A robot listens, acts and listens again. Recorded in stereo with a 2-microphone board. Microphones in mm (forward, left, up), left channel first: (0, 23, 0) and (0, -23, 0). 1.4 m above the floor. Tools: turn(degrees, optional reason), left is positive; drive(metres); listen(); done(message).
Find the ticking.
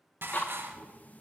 turn(degrees=35, reason="The ticking: about 35° left or 145° left.")
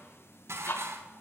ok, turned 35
turn(degrees=100, reason="So it is at 100° left.")
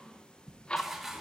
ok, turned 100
turn(degrees=20, reason="The ticking is now 20° left.")
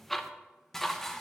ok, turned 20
done("Facing the ticking, under 1 m away.")